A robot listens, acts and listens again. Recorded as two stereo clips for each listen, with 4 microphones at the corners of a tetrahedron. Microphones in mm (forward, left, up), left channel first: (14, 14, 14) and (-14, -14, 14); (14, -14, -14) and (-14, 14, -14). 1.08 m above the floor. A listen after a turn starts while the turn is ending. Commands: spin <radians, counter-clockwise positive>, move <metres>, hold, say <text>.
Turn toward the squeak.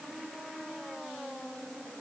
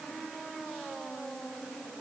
hold
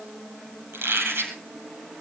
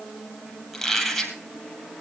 spin -2.27
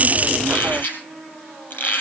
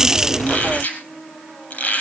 say Found it: a squeak, straight ahead, over 4 m away.